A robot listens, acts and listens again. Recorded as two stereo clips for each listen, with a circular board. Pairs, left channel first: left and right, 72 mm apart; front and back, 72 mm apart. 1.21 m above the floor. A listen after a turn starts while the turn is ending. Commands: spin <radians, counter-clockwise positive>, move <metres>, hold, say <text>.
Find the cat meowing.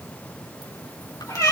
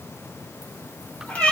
spin 1.22
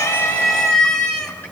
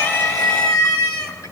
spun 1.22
spin 0.26
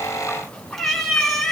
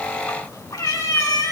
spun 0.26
spin 0.17
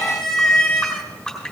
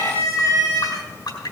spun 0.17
say Found it: a cat meowing, straight ahead, 2 to 4 m away.